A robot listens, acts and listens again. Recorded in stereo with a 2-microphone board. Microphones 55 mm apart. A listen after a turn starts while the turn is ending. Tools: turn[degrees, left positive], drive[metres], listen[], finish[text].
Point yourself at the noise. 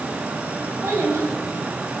Thought: The child speaking: about 50° right or 130° right.
Action: turn[-50]
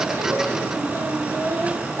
Thought: So it is at 60° right.
Action: turn[-60]
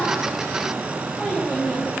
Action: finish[Found it: a child speaking, straight ahead.]